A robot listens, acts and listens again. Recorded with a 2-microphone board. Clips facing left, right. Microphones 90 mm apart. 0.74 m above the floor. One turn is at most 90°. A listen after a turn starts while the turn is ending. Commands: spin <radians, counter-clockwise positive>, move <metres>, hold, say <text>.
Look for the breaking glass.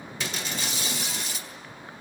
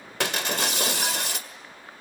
spin -1.57
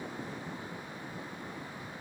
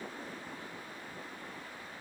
say Facing where the breaking glass came from. I can't hear it now.